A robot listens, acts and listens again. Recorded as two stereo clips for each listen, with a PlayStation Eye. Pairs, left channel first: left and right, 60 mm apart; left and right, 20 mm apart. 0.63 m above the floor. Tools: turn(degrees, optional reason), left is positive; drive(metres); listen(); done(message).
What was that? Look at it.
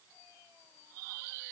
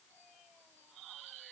listen()
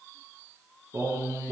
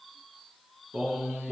turn(degrees=-60, reason="The singing: about 60° right or 120° right.")
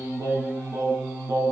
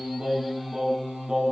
turn(degrees=-50, reason="So it is at 50° right.")
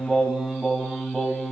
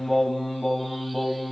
done("Facing the singing, 2 to 4 m away.")